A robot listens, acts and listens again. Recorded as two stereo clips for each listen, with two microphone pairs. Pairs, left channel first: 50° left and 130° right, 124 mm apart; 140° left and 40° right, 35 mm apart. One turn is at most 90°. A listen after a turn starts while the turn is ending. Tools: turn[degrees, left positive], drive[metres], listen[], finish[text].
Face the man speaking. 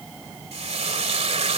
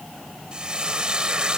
Action: listen[]
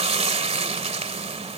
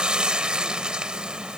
Action: listen[]
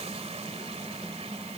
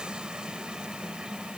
Action: finish[I can't make out a man speaking, only frying.]